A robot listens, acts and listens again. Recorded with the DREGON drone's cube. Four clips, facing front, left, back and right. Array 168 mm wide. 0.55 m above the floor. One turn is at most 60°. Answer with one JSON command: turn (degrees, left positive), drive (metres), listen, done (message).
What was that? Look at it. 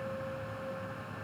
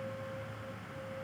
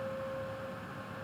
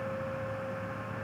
{"listen": true}
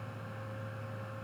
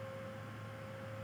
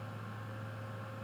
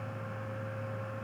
{"listen": true}
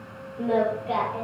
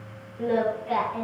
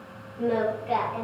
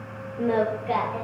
{"turn": -60}
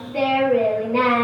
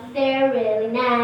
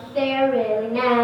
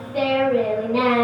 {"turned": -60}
{"turn": -25}
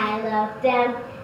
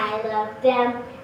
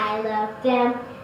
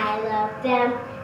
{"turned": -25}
{"done": "Found it: singing, straight ahead, over 4 m away."}